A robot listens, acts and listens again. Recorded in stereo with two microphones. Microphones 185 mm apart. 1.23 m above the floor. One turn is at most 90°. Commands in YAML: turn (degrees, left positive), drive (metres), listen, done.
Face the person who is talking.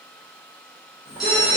turn: -30
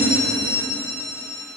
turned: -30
listen: true
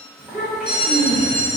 done: "Facing the child speaking."